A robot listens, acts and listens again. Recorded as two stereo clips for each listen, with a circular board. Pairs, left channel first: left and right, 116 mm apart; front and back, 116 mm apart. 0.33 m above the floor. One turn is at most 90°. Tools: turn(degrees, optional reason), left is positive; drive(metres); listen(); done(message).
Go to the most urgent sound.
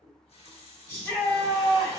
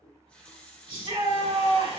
turn(degrees=90, reason="The shout: 155° left.")
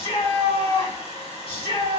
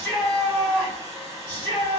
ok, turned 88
turn(degrees=70, reason="The shout is now 70° left.")
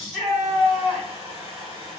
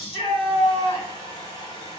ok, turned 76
drive(metres=1.0)
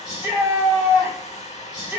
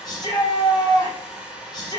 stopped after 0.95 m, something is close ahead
turn(degrees=-15, reason="The shout is now 15° right.")
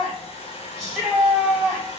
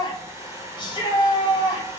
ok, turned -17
done("I am next to the shout.")